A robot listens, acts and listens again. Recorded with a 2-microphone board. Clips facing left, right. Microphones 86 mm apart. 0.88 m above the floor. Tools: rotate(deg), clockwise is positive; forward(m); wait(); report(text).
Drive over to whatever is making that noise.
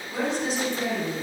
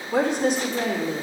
rotate(65)
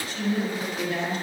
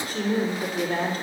rotate(50)
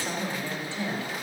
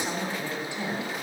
rotate(15)
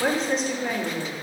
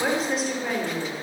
forward(1.0)
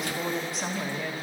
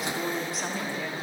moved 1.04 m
forward(1.0)
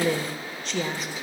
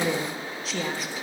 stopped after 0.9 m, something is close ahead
report("I am next to the woman speaking.")